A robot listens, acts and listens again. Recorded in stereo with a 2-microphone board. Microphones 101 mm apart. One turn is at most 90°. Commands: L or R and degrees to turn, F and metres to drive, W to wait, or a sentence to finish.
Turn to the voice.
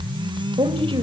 R60
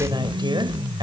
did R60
R50
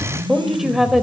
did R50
Facing the woman speaking, 2 to 4 m away.